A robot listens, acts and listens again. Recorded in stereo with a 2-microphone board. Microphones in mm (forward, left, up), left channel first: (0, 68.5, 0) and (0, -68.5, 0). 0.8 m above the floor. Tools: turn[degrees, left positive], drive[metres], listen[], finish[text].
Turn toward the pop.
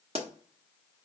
Thought: The pop: about 50° right or 130° right.
Action: turn[-50]
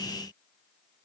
Action: listen[]
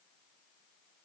Action: finish[I heard a pop, but can't make it out now. It was about straight ahead or 80° right.]